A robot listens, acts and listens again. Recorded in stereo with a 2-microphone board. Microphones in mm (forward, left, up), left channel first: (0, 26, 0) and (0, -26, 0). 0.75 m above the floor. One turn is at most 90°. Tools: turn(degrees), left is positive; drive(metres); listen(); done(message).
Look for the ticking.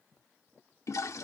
listen()
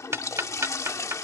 turn(degrees=-60)
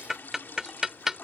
turn(degrees=-10)
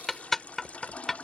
done("Found it: ticking, straight ahead.")